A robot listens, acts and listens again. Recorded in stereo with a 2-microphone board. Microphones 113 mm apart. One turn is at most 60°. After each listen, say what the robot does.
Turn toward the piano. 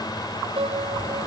Turn 55° right.
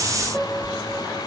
Found it: a piano, straight ahead.